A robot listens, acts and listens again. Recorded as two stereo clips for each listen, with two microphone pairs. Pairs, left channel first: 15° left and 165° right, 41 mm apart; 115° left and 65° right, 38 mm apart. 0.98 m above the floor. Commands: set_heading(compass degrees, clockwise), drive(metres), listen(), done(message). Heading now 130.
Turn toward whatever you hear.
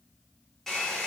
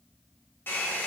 set_heading(35)
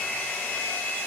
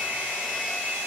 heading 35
set_heading(50)
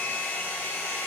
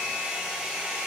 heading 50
done("Found it: a hair dryer, straight ahead, 1 to 2 m away.")